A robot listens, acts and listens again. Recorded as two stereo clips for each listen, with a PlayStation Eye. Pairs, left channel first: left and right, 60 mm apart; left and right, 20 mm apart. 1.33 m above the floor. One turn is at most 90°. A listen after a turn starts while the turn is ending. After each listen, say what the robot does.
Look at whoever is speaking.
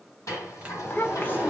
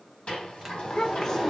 Turn 35° left.
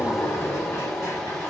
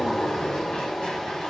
Keep listening.
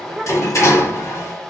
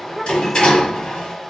Found it: a child speaking, straight ahead, under 1 m away.